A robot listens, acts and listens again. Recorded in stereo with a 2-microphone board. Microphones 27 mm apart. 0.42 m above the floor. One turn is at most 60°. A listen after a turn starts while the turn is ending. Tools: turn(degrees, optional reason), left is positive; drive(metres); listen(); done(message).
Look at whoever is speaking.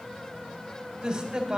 turn(degrees=-30, reason="The man speaking: about 30° right or 150° right.")
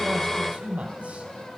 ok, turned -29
turn(degrees=-60, reason="So it is at 120° right.")
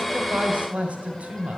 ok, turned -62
turn(degrees=-55, reason="The man speaking is now 55° right.")
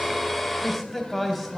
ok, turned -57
done("Found it: a man speaking, straight ahead.")